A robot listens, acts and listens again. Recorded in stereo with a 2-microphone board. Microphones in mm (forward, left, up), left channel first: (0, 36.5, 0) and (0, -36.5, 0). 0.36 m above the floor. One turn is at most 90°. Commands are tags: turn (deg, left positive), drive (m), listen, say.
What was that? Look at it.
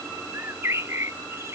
<turn deg="-40"/>
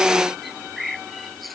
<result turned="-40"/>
<say>Found it: a bird, straight ahead.</say>